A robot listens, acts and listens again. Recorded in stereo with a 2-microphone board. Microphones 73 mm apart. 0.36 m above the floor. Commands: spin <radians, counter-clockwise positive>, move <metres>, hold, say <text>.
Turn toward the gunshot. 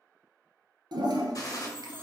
spin 0.96
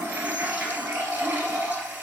hold
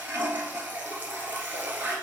say I heard a gunshot, but can't make it out now. It was about straight ahead or 70° left.